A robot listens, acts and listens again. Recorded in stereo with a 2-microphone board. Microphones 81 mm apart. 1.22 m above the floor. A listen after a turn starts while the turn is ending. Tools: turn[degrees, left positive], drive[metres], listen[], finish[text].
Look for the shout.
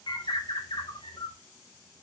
Action: listen[]
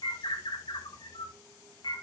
Action: listen[]
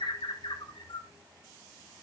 Action: finish[I can't make out a shout, only a bird.]